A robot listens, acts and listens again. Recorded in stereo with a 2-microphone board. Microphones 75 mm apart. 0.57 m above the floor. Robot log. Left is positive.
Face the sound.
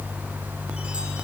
cmd idle
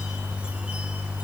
cmd idle
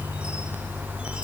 end: I can't make out anything to turn to.